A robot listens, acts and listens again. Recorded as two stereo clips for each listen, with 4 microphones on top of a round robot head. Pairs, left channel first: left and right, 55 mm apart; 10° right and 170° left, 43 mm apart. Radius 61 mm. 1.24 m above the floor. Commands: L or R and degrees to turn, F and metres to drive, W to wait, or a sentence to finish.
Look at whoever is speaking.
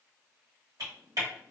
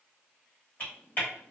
W
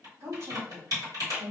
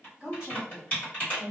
R120
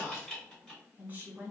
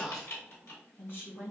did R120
R40
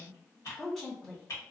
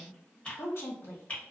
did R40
Found it: a woman speaking, straight ahead.